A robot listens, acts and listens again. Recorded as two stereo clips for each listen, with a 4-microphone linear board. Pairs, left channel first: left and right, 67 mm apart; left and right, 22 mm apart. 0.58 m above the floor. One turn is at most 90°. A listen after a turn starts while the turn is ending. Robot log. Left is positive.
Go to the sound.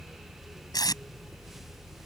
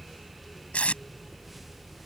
cmd yaw +90
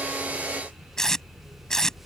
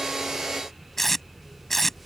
note: So it is at 10° left.
cmd yaw +10
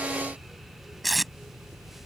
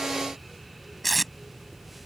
cmd fwd 1.0
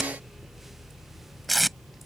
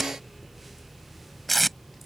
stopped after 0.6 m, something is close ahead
end: Something is in my way. I am facing the tape being pulled but have not reached it.